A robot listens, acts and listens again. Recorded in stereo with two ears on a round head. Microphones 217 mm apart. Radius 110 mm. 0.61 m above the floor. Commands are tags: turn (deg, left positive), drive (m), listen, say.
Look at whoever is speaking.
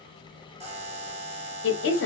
<turn deg="50"/>
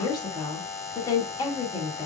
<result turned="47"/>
<turn deg="20"/>
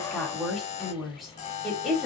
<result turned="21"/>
<say>Found it: a woman speaking, straight ahead, 1 to 2 m away.</say>